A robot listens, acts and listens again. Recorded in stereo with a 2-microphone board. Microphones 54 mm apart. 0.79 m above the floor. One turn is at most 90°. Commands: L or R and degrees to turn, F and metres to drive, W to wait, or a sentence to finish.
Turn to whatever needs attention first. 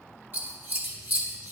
W
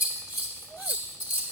W
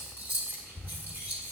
I can't make out anything urgent, only scissors.